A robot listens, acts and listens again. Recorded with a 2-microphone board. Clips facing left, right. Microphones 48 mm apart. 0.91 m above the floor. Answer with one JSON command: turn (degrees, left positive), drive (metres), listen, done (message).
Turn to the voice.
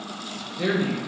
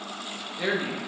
{"turn": -30}
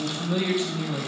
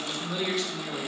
{"turn": 20}
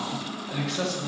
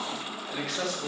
{"done": "Facing the man speaking."}